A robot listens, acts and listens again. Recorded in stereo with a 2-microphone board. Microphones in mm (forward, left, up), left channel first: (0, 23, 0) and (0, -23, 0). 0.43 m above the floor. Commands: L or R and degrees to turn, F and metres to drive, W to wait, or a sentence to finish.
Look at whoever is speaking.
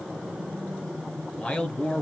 L30
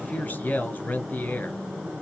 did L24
L125
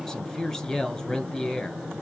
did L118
L10
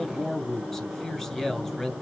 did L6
Facing the man speaking.